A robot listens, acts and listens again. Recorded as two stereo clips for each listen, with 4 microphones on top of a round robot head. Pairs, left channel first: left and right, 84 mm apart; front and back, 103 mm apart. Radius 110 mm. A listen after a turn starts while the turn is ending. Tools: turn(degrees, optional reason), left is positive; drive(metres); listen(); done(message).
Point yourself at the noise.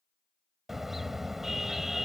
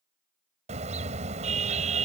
turn(degrees=-175, reason="The car horn: 175° right.")
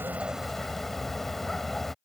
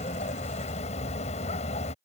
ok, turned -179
done("Facing the car horn.")